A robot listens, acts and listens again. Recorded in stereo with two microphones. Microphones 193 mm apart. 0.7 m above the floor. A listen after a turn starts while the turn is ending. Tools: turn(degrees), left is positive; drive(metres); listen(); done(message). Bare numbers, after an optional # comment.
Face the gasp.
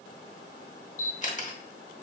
listen()
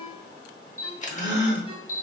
# The gasp: about 70° left or 110° left.
turn(70)
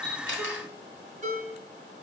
listen()
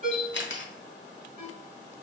done("I heard a gasp, but can't make it out now. It was about straight ahead or 40° left.")